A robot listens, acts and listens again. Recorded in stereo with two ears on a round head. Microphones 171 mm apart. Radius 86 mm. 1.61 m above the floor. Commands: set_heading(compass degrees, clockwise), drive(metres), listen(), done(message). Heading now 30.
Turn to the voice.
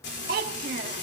set_heading(80)
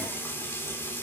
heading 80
listen()
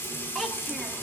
done("Facing the child speaking.")